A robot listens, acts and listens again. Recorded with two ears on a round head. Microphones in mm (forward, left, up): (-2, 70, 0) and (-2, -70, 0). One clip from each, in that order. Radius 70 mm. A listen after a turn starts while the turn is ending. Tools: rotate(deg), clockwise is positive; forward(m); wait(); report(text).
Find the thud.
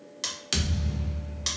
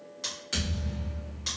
rotate(-90)
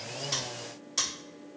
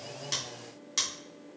report("I heard a thud from this way, but can't make it out now.")